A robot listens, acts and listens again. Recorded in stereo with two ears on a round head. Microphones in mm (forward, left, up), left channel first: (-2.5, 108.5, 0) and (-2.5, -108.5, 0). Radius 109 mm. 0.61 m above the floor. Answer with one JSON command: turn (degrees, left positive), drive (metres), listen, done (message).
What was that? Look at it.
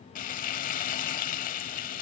{"turn": 35}
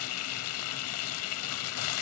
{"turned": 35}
{"turn": 110}
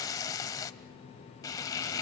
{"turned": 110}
{"turn": 15}
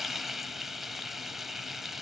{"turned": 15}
{"done": "Facing the frying, under 1 m away."}